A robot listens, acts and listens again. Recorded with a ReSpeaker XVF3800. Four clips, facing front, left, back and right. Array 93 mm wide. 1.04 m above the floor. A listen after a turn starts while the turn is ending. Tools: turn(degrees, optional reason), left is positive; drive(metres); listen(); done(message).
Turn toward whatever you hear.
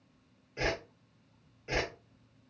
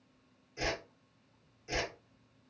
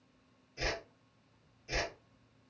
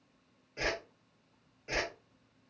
turn(degrees=-35, reason="The whoosh: 35° right.")
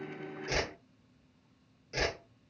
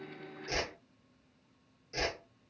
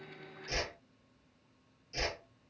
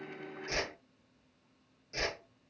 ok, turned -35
done("Found it: a whoosh, straight ahead.")